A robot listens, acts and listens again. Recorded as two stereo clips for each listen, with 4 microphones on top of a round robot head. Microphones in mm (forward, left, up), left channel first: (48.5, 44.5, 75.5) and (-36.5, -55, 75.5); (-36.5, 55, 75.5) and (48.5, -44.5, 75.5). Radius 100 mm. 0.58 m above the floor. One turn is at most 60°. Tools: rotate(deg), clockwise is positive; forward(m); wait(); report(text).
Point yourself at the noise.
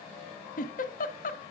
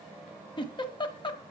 rotate(-60)
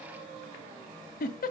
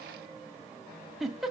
rotate(-35)
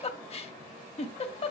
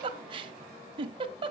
report("Found it: a giggle, straight ahead, 1 to 2 m away.")